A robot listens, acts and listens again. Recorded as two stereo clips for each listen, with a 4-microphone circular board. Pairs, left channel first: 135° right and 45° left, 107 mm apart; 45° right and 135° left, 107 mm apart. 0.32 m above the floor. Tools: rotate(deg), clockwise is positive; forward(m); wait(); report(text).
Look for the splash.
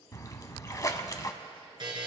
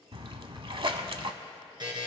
rotate(-170)
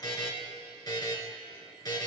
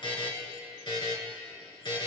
report("Facing where the splash came from. I can't hear it now.")